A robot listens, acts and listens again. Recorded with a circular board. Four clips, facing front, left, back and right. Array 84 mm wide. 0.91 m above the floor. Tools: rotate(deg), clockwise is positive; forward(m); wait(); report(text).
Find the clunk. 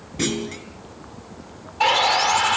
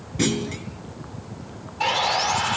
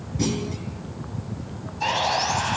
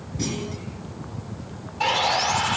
rotate(-45)
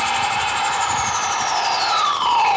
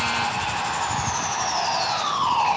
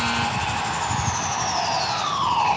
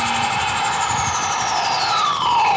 report("Facing where the clunk came from. I can't hear it now.")